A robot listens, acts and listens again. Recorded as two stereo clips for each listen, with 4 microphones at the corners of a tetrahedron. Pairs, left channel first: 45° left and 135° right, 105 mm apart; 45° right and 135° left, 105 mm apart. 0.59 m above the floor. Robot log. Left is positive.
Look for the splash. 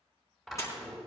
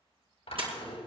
note: The splash: 105° left.
cmd yaw +105
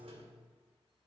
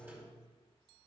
end: I heard a splash from this way, but can't make it out now.